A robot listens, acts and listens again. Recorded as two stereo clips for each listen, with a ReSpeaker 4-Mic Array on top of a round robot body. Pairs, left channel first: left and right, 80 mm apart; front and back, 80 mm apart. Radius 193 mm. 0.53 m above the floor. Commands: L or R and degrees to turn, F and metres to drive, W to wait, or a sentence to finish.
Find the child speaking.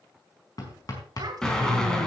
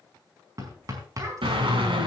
R130
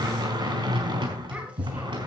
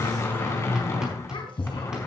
W
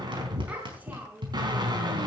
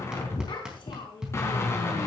R20
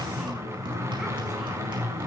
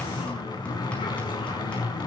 W
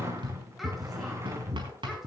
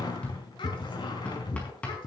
W
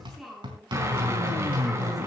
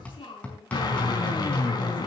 Found it: a child speaking, straight ahead, over 4 m away.